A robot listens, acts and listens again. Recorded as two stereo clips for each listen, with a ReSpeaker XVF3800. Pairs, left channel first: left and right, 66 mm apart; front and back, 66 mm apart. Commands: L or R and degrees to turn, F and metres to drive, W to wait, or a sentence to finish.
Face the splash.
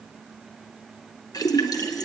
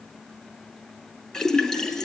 L85
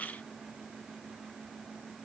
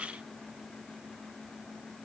I heard a splash from this way, but can't make it out now.